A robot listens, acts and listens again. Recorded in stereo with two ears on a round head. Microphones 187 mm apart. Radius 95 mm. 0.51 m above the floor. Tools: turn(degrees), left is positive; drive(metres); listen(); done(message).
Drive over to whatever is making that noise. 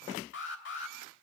turn(degrees=60)
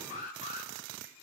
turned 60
turn(degrees=45)
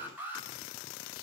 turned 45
turn(degrees=-10)
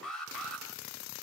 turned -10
drive(metres=1.0)
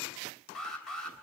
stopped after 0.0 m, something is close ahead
done("Blocked. The alarm is further on, straight ahead.")